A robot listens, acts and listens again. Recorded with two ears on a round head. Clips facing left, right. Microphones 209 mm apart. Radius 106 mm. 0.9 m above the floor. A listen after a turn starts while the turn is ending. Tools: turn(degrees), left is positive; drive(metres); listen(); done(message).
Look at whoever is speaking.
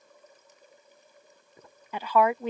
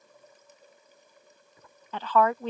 turn(degrees=30)
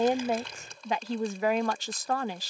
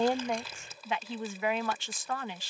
turn(degrees=140)
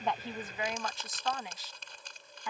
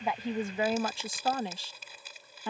turn(degrees=-30)
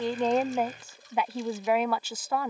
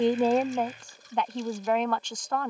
done("Facing the woman speaking.")